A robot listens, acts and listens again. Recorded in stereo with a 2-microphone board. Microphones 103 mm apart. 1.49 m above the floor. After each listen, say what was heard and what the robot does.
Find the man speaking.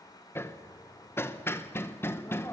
Keep listening.
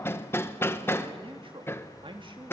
The man speaking: about 55° right or 125° right. Turn 55° right.
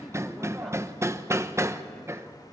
Keep listening.
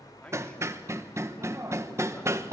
Keep listening.
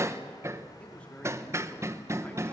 So it is at 10° left. Turn 10° left.
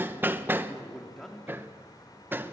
Found it: a man speaking, straight ahead.